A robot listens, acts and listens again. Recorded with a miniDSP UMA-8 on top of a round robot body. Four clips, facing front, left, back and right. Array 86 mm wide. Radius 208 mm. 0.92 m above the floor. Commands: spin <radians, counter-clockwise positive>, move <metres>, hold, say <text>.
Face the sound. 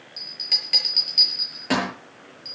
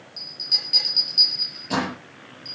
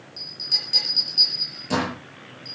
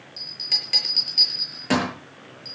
spin -0.79
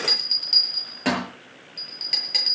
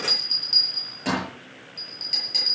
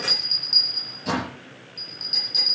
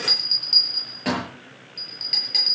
spin -0.26
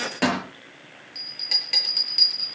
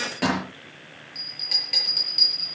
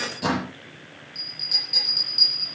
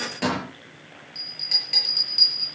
say Facing the bell, over 4 m away.